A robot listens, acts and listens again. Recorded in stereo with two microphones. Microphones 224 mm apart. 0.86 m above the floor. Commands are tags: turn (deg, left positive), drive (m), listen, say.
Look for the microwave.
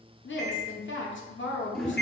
<turn deg="50"/>
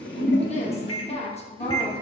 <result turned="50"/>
<turn deg="80"/>
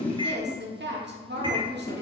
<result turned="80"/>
<turn deg="-20"/>
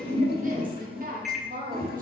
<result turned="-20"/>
<say>Found it: a microwave, straight ahead, under 1 m away.</say>